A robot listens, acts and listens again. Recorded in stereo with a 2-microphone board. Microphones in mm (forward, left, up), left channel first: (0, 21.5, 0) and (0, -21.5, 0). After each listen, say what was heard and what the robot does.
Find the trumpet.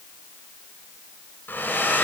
Keep listening.
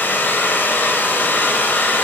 Keep listening.
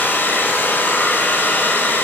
I can't make out a trumpet, only a hair dryer.